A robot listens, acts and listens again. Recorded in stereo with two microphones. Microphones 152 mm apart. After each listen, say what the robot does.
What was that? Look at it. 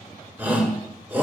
Turn 30° right.
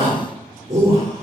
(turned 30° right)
Turn 135° right.
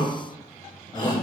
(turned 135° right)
Turn 35° left.
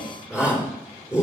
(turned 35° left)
Turn 10° right.
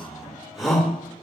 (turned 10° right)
Facing the shout.